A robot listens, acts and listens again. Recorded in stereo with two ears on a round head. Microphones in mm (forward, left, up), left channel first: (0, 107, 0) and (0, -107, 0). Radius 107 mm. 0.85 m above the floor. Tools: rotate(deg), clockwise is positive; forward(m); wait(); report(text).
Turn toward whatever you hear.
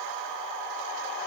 wait()
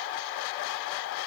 wait()
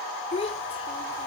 rotate(-25)
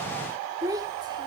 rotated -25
rotate(15)
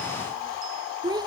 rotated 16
rotate(20)
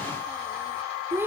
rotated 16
rotate(10)
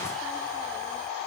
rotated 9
wait()
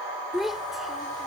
report("Facing the child speaking.")